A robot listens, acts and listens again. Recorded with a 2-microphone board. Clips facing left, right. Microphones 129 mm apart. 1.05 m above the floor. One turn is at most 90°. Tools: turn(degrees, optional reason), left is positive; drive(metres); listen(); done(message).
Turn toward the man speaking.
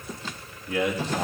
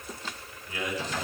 turn(degrees=70, reason="The man speaking: about 70° left or 110° left.")
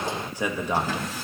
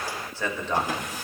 turn(degrees=10, reason="So it is at 10° left.")
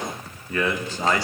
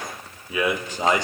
turn(degrees=-20, reason="The man speaking is now 20° right.")
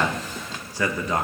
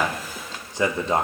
turn(degrees=-30, reason="The man speaking is now 30° right.")
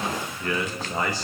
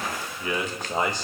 turn(degrees=-20, reason="The man speaking is now 20° right.")
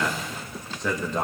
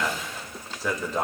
done("Facing the man speaking, 1 to 2 m away.")